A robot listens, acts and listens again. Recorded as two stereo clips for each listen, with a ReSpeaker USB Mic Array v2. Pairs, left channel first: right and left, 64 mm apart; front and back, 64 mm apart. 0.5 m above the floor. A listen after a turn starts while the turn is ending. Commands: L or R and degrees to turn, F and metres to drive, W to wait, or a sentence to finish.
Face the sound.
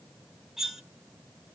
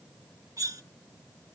L175
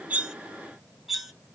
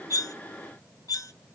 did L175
Facing the cutlery clinking.